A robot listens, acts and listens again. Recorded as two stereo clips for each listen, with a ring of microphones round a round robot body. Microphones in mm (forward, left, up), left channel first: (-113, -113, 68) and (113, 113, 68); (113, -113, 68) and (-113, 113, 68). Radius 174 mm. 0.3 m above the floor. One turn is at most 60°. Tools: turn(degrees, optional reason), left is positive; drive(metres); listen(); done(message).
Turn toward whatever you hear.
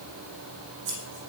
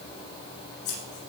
turn(degrees=-10, reason="The scissors: 10° right.")
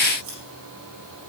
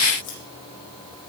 done("Facing the scissors.")